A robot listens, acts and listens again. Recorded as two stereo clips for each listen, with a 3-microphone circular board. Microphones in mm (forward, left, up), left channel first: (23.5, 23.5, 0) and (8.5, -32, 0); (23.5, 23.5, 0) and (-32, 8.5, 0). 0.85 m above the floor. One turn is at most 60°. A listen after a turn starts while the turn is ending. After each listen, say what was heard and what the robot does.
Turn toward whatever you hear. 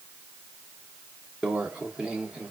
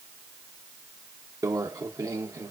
The microwave: straight behind. Turn 60° left.
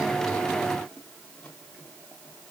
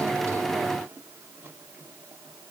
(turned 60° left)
Nothing new. It was at 120° left. Turn 60° left.
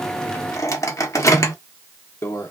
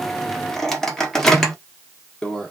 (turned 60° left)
The microwave is now 95° left. Turn 60° left.
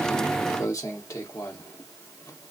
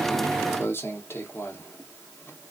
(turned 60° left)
The microwave is now 60° left. Turn 60° left.
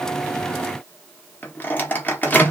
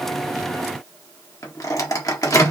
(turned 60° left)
The microwave is now 15° left. Turn 15° left.
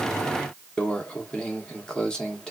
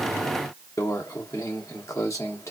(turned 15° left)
Facing the microwave, 1 to 2 m away.